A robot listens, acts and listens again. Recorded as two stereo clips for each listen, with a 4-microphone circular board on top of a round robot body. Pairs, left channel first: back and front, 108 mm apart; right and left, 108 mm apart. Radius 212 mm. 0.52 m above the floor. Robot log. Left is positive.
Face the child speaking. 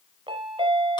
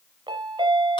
cmd idle
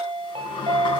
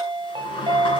cmd idle
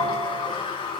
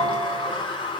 end: I can't make out a child speaking, only a sliding door and a chime.